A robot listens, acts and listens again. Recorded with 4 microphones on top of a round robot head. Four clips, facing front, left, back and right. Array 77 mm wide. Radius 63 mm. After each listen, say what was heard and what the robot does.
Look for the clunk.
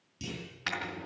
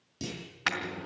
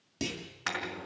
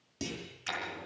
The clunk: 170° right. Turn 170° right.
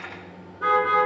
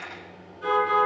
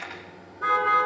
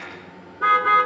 I heard a clunk from this way, but can't make it out now.